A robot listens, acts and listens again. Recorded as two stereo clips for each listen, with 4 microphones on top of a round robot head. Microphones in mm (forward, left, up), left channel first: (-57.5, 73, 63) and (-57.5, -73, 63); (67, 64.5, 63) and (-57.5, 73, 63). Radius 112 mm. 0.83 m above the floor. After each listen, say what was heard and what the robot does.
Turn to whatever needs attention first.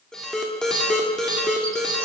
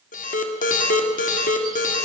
Facing the alarm.